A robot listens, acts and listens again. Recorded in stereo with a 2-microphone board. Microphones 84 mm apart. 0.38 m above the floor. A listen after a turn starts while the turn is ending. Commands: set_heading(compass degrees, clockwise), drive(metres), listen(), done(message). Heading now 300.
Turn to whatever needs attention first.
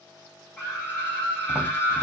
set_heading(275)
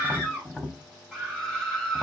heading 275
done("Found it: a scream, straight ahead, 2 to 4 m away.")